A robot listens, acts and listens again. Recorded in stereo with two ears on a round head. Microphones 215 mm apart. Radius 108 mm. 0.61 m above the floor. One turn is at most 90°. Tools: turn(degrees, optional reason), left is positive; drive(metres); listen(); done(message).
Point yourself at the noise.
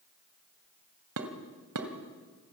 turn(degrees=-70, reason="The dishes clattering: about 70° right or 110° right.")
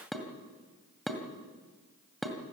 done("Found it: dishes clattering, straight ahead, 2 to 4 m away.")